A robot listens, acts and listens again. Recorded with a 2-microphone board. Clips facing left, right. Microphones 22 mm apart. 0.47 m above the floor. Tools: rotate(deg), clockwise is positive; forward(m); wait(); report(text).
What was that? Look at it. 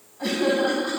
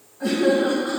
rotate(-45)
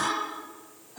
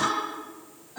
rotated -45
rotate(15)
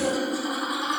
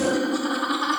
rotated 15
rotate(10)
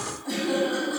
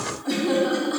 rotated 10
rotate(10)
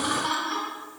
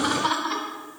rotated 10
rotate(10)
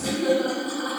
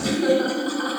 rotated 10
report("Found it: laughter, straight ahead, over 4 m away.")